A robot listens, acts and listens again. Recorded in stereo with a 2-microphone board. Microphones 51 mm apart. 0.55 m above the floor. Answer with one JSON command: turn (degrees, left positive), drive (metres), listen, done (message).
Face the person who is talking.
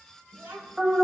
{"turn": -55}
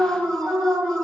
{"listen": true}
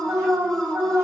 {"listen": true}
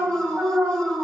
{"done": "I heard a child speaking, but can't make it out now. It was about straight ahead or 70° right."}